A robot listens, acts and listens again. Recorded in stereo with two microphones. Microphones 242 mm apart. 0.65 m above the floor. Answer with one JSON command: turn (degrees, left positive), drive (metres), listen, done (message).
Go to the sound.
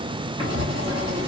{"turn": -25}
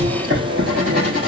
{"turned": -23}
{"turn": -135}
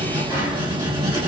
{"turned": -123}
{"turn": -10}
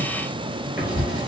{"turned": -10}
{"drive": 1.0}
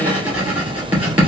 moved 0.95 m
{"drive": 1.0}
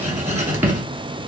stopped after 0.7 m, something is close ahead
{"turn": -10}
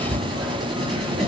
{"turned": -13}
{"done": "I am next to the writing."}